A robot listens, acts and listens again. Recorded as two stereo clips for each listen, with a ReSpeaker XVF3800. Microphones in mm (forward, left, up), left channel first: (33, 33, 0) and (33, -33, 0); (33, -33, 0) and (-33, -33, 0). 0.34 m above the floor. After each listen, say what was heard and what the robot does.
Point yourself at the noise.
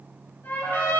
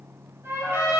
The trumpet: 135° left. Turn 135° left.
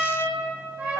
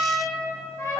The trumpet is now 40° right. Turn 40° right.
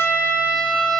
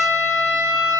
The trumpet is now 10° left. Turn 10° left.
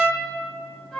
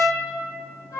Found it: a trumpet, straight ahead.